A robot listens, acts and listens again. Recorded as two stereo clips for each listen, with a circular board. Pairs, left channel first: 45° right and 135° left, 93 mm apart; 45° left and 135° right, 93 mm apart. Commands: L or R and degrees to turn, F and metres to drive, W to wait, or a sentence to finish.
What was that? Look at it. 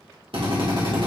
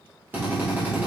L155
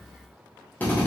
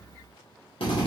L25
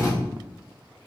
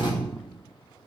L10
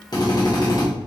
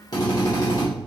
Found it: a drill, straight ahead.